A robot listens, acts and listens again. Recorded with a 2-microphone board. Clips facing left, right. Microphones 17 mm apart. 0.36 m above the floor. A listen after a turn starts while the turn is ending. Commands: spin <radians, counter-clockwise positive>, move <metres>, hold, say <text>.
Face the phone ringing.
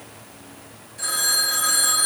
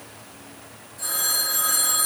spin 0.70
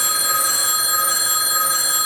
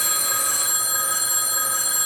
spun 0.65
spin 1.75
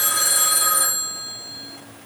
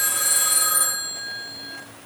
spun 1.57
spin 0.17
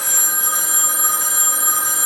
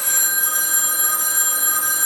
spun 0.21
say Found it: a phone ringing, straight ahead, over 4 m away.